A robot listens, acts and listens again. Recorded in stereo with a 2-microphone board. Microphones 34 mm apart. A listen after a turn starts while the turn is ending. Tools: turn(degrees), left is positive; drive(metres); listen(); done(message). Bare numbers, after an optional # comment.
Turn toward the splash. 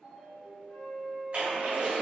# The splash: about 40° right or 140° right.
turn(-40)
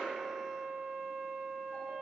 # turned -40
listen()
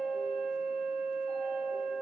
done("I heard a splash, but can't make it out now. It was about straight ahead or 100° right.")